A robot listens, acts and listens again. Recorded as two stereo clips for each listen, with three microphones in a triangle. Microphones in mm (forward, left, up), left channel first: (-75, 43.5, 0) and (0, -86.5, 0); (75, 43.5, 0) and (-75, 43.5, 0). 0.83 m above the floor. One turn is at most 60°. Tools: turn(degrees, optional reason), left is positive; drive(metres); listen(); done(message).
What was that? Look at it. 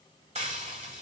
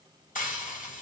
turn(degrees=-20, reason="The frying: 20° right.")
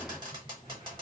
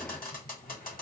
done("Facing the frying, 2 to 4 m away.")